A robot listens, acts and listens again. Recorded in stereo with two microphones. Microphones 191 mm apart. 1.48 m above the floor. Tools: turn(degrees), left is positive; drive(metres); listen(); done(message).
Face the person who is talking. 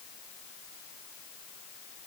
listen()
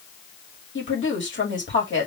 turn(degrees=90)
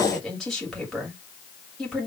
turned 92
done("Facing the woman speaking.")